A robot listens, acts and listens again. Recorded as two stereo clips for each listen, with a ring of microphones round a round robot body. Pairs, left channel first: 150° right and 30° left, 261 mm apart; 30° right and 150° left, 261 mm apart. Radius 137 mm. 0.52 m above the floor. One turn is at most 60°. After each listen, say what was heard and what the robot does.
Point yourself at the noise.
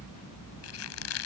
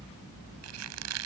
The squeak: straight behind. Turn 60° left.
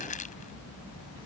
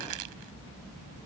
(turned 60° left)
Nothing new. It was at 120° left. Turn 60° left.
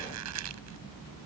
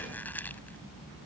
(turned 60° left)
Nothing new. It was at 60° left. Turn 60° left.
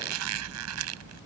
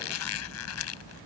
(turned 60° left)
Found it: a squeak, straight ahead.